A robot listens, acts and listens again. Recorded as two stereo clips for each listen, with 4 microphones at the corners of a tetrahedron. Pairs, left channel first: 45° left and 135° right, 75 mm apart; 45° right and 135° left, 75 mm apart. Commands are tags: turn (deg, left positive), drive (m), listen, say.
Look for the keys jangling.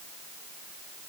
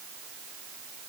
<listen/>
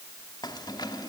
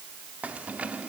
<turn deg="65"/>
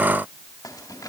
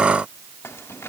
<listen/>
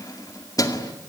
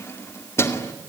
<turn deg="10"/>
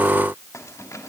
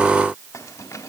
<say>Found it: keys jangling, straight ahead, 2 to 4 m away.</say>